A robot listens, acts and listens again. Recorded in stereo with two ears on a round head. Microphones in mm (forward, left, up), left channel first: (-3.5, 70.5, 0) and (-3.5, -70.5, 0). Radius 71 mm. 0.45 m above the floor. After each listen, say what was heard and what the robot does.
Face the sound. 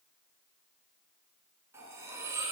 The cutlery clinking: about 20° right or 160° right. Turn 20° right.
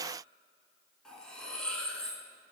Found it: cutlery clinking, straight ahead, 2 to 4 m away.